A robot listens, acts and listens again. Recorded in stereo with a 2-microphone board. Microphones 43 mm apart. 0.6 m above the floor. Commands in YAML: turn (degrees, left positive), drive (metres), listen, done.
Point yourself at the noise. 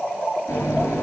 turn: 90
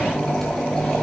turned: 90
turn: 10
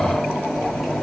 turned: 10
done: "Facing the running tap, over 4 m away."